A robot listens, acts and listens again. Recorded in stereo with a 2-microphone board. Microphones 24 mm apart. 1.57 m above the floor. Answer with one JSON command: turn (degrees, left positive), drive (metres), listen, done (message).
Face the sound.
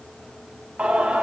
{"turn": -70}
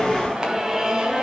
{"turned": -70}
{"turn": -30}
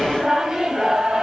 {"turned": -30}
{"turn": -30}
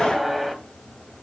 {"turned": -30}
{"done": "Facing the singing."}